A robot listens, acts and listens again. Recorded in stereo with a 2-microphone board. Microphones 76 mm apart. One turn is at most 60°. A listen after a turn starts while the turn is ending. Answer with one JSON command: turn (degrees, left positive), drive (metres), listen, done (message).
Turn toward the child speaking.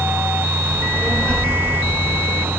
{"turn": 15}
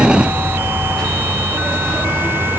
{"turn": 30}
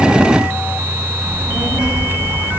{"turn": -15}
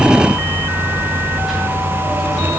{"done": "Facing the child speaking, over 4 m away."}